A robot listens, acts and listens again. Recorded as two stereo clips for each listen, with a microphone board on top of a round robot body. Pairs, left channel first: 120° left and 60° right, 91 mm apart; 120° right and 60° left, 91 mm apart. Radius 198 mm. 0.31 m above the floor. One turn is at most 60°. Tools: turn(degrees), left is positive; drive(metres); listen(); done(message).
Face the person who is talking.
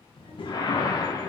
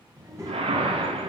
turn(degrees=60)
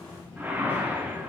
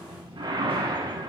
turn(degrees=50)
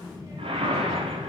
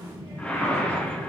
done("Facing the child speaking, 2 to 4 m away.")